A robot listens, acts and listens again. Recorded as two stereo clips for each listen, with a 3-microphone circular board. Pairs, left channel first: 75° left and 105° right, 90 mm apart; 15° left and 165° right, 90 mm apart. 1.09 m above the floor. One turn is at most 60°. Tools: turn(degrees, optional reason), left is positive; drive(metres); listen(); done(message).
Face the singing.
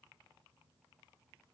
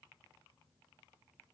listen()
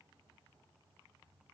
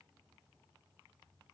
listen()
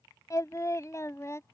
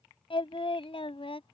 turn(degrees=15, reason="The singing: 15° left.")
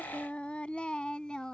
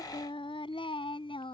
done("Found it: singing, straight ahead.")